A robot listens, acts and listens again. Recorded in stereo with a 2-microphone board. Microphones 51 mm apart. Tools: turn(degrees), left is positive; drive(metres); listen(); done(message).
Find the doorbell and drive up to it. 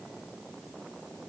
listen()
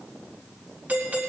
turn(degrees=-35)
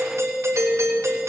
turn(degrees=-110)
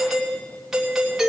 drive(metres=1.0)
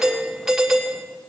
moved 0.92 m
turn(degrees=-10)
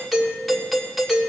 drive(metres=1.0)
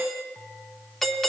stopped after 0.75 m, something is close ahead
done("I am next to the doorbell.")